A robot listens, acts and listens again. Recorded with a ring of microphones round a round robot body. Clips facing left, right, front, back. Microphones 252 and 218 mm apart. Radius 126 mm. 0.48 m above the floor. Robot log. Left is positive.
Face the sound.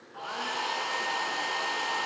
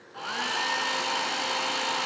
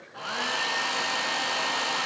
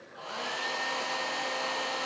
note: The hair dryer: 35° right.
cmd yaw -35
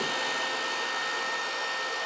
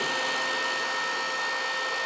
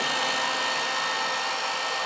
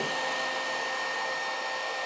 end: Found it: a hair dryer, straight ahead.